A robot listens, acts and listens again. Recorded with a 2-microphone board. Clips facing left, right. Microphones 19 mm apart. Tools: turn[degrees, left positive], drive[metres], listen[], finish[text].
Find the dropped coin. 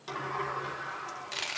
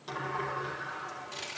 Thought: The dropped coin: about 35° left or 145° left.
Action: turn[35]
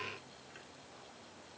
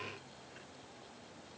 Action: listen[]
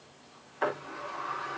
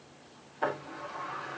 Action: finish[I heard a dropped coin, but can't make it out now. It was about straight ahead or 110° left.]